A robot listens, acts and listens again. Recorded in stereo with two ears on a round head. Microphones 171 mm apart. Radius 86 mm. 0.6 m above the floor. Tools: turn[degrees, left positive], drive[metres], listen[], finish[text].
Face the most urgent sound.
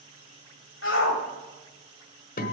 Thought: The shout: about 70° left or 110° left.
Action: turn[70]
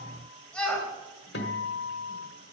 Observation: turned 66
Action: finish[Facing the shout, 2 to 4 m away.]